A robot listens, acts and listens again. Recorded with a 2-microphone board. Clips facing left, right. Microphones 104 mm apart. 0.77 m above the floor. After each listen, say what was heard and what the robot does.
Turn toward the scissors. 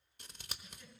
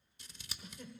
The scissors: about 55° left or 125° left. Turn 55° left.
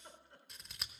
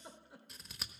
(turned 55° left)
Facing the scissors, 1 to 2 m away.